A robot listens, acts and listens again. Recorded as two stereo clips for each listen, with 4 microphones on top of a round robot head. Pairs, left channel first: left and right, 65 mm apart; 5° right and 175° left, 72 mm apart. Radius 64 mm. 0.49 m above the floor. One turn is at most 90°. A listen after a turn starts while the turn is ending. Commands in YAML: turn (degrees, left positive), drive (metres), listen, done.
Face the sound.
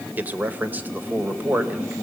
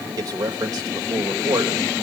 turn: -90
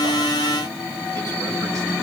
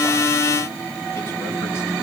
turn: -60
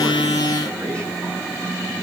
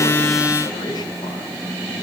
listen: true
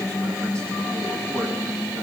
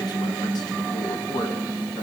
done: "Facing where the man speaking came from. I can't hear it now."